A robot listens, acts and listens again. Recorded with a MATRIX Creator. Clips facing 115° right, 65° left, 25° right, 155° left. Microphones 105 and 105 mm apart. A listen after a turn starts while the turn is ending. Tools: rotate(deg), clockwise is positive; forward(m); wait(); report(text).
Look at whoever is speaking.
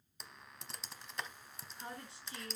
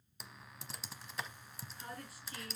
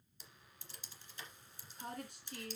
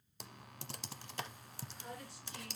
rotate(50)
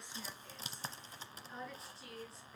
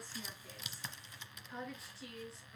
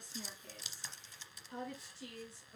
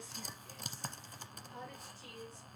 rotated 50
rotate(20)
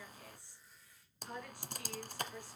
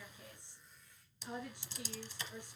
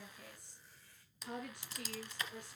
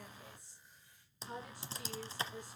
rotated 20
report("Facing the woman speaking.")